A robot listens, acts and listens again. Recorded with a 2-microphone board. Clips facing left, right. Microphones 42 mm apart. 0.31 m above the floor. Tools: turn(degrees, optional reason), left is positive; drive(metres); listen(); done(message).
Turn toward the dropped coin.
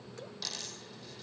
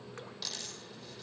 turn(degrees=-30)
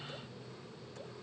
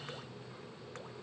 listen()
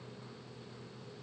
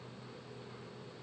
done("I heard a dropped coin, but can't make it out now. It was about 15° left or 135° right.")